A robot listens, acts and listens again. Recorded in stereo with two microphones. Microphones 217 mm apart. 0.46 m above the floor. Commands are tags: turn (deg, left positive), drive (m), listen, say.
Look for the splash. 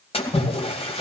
<turn deg="25"/>
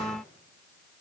<listen/>
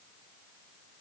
<say>I heard a splash, but can't make it out now. It was about straight ahead or 130° left.</say>